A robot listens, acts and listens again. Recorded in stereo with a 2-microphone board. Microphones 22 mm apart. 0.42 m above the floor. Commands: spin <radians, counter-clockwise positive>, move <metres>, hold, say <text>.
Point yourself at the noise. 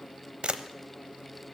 spin -1.05
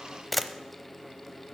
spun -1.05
say Facing the camera shutter, under 1 m away.